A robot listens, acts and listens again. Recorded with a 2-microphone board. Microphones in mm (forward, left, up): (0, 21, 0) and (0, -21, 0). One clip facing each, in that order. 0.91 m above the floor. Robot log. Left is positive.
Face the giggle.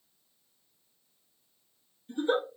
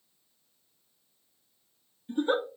note: The giggle: about 30° right or 150° right.
cmd yaw -30
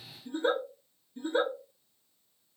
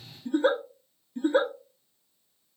note: So it is at 120° right.
cmd yaw -120
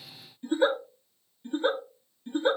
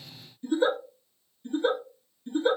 note: The giggle is now 30° left.
cmd yaw +30
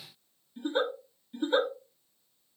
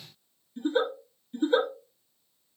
note: The giggle is now 10° left.
cmd yaw +10
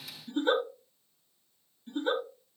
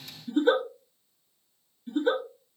end: Facing the giggle, 1 to 2 m away.